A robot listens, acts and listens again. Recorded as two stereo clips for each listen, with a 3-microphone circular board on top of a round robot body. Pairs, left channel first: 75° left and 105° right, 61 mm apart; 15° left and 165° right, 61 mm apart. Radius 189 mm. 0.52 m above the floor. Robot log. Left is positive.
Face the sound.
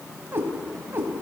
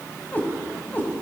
note: The cat meowing: 50° right.
cmd yaw -50
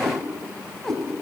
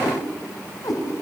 note: The cat meowing is now 10° right.
cmd yaw -10
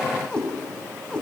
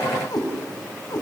end: Found it: a cat meowing, straight ahead.